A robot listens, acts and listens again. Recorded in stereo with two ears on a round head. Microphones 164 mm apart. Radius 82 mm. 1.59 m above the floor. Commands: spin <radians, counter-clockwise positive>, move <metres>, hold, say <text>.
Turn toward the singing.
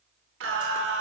spin -1.57
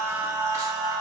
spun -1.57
spin -0.35
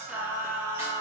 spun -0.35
spin -0.26
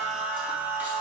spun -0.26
spin -0.17
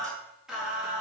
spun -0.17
say Facing the singing.